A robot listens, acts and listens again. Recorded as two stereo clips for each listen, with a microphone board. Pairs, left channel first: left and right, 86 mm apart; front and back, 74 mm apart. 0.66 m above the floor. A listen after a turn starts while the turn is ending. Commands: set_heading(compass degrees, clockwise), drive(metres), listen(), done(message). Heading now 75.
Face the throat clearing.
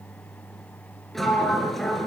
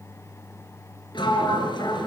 listen()
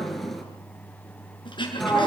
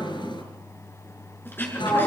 set_heading(15)
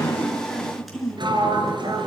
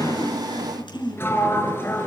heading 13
done("Facing the throat clearing.")